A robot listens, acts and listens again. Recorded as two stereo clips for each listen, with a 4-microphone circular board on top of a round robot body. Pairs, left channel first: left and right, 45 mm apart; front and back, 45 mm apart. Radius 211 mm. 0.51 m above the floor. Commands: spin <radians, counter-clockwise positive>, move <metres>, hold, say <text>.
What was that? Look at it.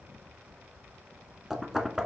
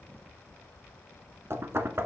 spin -2.97
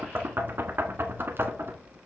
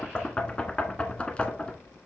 spin -1.05
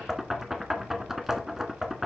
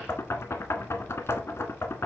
say Facing the knocking, 1 to 2 m away.